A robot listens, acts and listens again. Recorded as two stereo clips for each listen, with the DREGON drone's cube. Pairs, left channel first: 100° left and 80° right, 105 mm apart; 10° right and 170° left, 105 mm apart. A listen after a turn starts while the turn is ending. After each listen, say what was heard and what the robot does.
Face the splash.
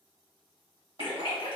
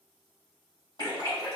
The splash: 125° left. Turn 125° left.
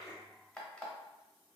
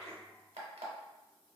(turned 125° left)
Facing where the splash came from. I can't hear it now.